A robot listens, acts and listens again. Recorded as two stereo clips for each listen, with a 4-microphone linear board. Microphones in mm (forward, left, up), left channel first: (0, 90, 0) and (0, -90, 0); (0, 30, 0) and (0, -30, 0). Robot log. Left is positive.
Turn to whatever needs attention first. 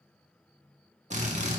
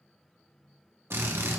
cmd idle
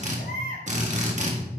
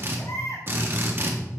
note: The baby crying: about 60° left or 120° left.
cmd yaw +60
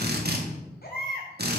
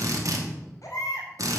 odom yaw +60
note: So it is at 60° left.
cmd yaw +60
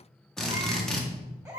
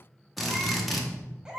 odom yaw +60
note: The baby crying is now 15° right.
cmd yaw -15
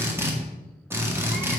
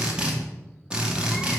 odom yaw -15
cmd idle
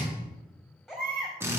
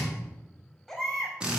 end: Found it: a baby crying, straight ahead.